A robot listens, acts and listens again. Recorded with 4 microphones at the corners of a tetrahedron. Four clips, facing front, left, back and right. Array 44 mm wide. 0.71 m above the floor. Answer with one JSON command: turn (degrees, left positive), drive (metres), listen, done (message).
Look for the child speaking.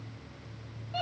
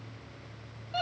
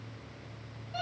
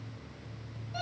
{"listen": true}
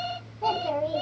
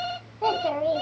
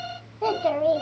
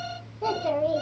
{"turn": 140}
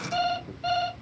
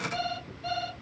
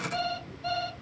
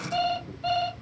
{"listen": true}
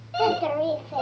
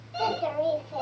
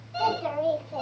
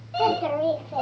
{"turn": -25}
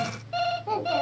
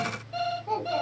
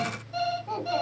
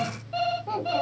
{"turn": -25}
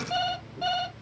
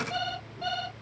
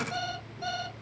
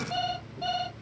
{"listen": true}
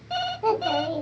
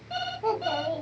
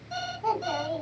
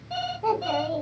{"done": "Found it: a child speaking, straight ahead, 1 to 2 m away."}